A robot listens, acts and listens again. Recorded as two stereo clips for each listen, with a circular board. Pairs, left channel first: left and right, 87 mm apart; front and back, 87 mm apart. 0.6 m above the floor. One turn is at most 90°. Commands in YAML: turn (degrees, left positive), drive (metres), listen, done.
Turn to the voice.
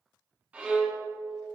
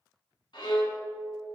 listen: true
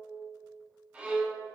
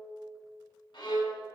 listen: true
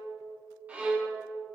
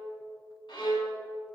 done: "I can't make out anyone speaking, only a violin."